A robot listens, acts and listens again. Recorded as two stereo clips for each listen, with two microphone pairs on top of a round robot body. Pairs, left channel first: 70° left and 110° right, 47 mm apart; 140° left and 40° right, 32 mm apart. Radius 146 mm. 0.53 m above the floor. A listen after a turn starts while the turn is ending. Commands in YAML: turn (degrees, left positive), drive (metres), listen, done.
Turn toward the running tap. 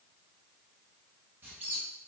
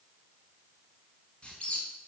listen: true
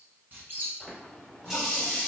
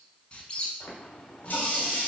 turn: 160
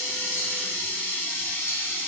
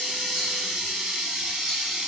turn: 30
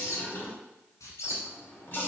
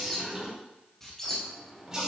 turn: 25
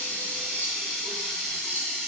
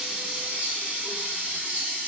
turn: -10
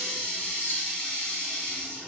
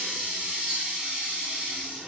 done: "Found it: a running tap, straight ahead, 2 to 4 m away."